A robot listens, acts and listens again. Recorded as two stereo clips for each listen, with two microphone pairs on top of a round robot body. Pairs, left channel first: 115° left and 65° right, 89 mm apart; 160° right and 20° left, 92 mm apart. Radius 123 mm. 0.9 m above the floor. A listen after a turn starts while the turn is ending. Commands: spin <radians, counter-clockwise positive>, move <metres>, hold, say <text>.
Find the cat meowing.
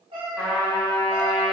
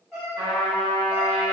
spin -1.05
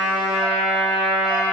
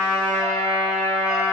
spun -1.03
hold
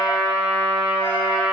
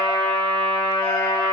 hold
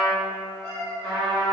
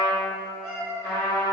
spin 1.13
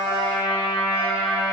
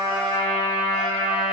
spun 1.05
hold
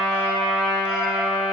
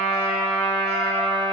hold
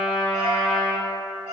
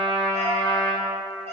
spin 0.44
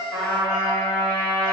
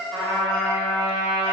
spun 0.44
hold
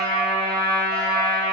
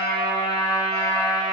hold
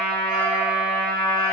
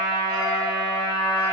say Facing where the cat meowing came from. I can't hear it now.